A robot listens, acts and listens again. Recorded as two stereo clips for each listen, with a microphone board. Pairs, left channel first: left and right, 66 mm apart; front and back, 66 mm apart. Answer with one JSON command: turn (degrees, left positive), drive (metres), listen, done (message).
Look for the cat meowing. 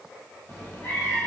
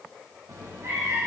{"turn": 140}
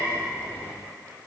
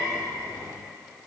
{"turn": -25}
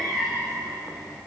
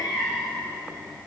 {"turn": -10}
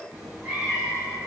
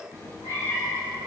{"turn": -10}
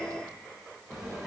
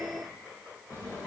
{"done": "Facing the cat meowing."}